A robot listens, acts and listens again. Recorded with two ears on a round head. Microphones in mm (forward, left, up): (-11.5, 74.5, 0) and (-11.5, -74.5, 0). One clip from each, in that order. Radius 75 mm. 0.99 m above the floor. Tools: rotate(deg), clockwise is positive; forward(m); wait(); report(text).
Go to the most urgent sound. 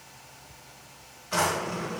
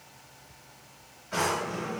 wait()
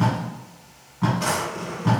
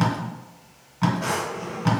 wait()
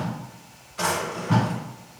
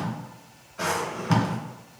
report("I can't make out anything urgent to turn to.")